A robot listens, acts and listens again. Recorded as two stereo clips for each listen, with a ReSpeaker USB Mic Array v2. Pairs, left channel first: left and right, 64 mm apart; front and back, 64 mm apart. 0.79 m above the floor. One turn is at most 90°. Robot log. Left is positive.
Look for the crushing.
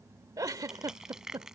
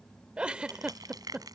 note: The crushing: 170° right.
cmd yaw -90
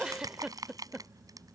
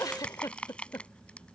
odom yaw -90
note: The crushing is now 75° right.
cmd yaw -75
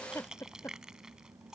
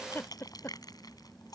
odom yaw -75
note: The crushing is now 10° right.
cmd yaw -10
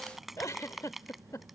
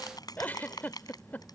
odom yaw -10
end: Facing the crushing.